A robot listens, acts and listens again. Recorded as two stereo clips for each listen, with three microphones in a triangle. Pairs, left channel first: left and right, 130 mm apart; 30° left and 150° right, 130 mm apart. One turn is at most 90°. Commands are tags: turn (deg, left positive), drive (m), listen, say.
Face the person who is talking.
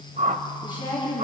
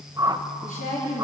<turn deg="35"/>
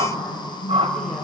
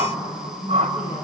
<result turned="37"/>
<say>Facing the woman speaking, over 4 m away.</say>